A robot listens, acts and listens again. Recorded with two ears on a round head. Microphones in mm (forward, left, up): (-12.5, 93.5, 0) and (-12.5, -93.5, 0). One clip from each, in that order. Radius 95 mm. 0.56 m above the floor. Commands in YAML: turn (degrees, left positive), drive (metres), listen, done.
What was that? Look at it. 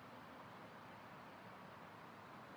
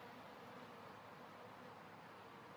listen: true
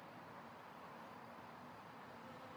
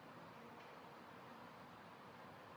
listen: true
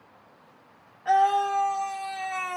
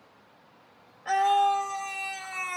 turn: 30
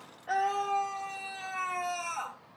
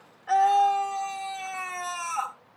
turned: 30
turn: -30
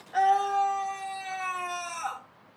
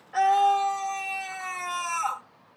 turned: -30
turn: -10
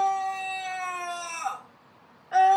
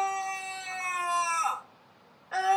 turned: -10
done: "Facing the scream."